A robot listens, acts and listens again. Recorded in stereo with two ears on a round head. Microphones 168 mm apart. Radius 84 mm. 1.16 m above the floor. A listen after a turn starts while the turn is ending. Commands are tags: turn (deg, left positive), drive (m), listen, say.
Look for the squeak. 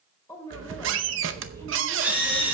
<turn deg="-90"/>
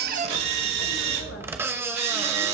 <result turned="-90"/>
<turn deg="-15"/>
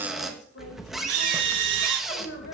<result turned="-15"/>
<say>Found it: a squeak, straight ahead.</say>